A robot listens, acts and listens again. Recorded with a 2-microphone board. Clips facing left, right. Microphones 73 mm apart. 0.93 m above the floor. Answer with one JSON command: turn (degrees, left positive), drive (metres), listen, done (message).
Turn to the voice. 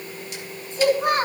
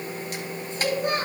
{"turn": 90}
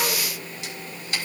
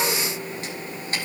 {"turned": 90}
{"listen": true}
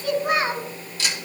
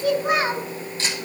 {"turn": -15}
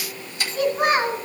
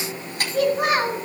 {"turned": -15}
{"done": "Found it: a child speaking, straight ahead, 2 to 4 m away."}